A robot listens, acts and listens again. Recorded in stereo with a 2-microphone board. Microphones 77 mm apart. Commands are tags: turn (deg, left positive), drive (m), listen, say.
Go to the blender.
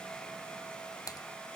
<listen/>
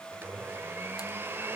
<turn deg="-30"/>
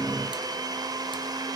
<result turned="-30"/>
<turn deg="-125"/>
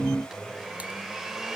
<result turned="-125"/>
<drive m="1.0"/>
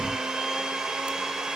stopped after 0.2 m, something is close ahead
<say>Blocked. The blender is further on, straight ahead.</say>